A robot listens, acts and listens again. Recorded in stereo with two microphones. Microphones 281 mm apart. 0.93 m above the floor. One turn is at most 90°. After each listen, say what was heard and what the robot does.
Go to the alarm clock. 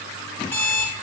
Turn 30° left.
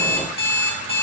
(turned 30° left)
So it is at 145° left. Turn 90° left.
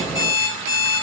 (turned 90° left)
The alarm clock is now 45° left. Turn 45° left.
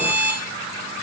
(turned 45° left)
The alarm clock is now 20° left. Turn 20° left.
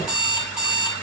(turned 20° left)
Drive 1.0 m forward.
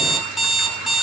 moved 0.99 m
Drive 1.0 m forward.
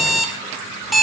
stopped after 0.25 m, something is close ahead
I am next to the alarm clock.